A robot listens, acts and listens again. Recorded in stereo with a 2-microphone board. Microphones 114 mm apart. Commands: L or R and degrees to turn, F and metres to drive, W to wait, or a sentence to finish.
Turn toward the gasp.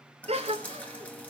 R70
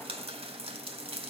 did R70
W
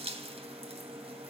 I heard a gasp, but can't make it out now. It was about straight ahead or 40° right.